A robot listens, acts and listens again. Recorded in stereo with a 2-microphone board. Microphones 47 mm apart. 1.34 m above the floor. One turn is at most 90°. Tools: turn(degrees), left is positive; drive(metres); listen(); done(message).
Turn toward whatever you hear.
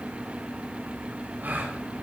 turn(degrees=-40)
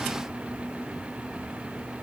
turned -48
listen()
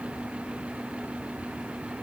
done("I heard a gasp, but can't make it out now. It was about 5° left or 90° right.")